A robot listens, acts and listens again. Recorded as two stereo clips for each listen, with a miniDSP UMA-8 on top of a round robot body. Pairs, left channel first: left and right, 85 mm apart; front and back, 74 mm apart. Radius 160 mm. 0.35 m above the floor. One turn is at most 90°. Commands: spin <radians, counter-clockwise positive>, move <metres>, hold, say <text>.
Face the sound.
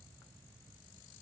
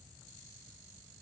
hold
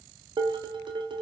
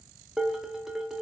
spin -1.57
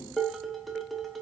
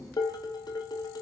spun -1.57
say Found it: dishes clattering, straight ahead, under 1 m away.